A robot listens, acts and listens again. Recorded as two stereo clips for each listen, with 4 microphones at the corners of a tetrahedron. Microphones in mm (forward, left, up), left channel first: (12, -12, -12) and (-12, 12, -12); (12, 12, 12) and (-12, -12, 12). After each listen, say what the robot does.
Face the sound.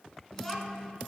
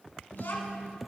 Turn 30° left.
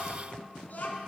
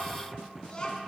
Turn 20° right.
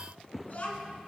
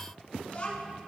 Turn 10° right.
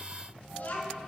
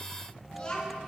Turn 20° right.
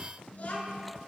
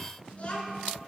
Found it: a child speaking, straight ahead, 2 to 4 m away.